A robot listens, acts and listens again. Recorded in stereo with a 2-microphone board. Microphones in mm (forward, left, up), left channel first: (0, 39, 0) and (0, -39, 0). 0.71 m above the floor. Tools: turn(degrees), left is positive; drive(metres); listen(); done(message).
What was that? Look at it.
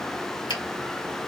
turn(degrees=70)
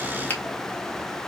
turn(degrees=30)
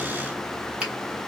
turn(degrees=-15)
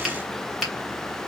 done("Found it: a finger snap, straight ahead, 1 to 2 m away.")